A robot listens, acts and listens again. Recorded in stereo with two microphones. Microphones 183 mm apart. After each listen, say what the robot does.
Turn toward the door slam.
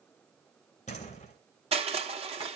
Turn 40° left.
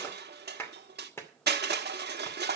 Keep listening.
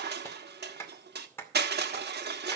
I heard a door slam, but can't make it out now. It was about straight ahead or 100° left.